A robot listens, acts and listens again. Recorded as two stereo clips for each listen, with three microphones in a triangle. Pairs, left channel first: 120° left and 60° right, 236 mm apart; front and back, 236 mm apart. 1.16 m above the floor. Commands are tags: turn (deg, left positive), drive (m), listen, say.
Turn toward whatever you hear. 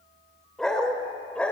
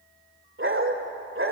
<turn deg="-155"/>
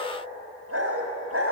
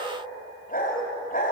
<turn deg="-50"/>
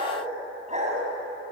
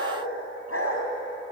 <say>Facing the dog barking, over 4 m away.</say>